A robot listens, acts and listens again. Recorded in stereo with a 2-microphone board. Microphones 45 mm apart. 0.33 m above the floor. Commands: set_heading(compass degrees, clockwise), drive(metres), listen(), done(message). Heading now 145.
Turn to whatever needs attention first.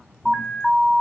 set_heading(115)
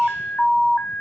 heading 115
set_heading(335)
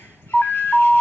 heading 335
set_heading(310)
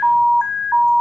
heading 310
set_heading(300)
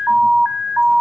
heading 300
done("Facing the alarm.")